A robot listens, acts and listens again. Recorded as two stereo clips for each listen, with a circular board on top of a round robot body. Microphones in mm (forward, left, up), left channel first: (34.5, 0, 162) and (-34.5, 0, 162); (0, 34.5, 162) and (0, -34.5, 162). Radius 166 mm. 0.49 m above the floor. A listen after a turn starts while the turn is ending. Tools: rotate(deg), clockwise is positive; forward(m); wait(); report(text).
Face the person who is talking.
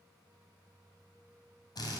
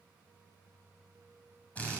wait()
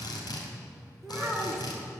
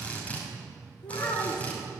rotate(-90)
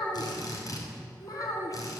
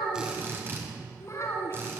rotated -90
rotate(-35)
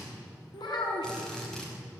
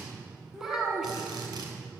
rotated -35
rotate(10)
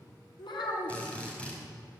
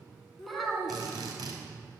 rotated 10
report("Found it: a child speaking, straight ahead.")